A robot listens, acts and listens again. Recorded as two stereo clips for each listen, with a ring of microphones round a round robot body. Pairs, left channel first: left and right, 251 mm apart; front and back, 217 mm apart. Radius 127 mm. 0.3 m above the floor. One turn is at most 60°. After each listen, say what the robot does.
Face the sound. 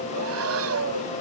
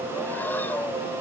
Turn 60° right.
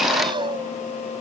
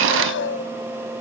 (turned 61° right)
Turn 20° right.
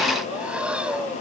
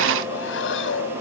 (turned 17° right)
Facing the breathing.